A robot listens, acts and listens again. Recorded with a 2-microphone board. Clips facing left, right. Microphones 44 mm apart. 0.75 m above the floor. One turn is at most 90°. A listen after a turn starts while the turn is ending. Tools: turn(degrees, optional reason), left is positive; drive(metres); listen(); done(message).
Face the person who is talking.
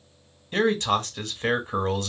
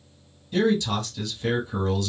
turn(degrees=45, reason="The man speaking: about 45° left or 135° left.")
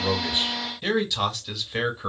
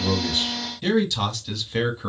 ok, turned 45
turn(degrees=10, reason="So it is at 10° left.")
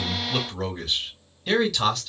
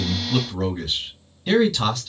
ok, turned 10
done("Facing the man speaking.")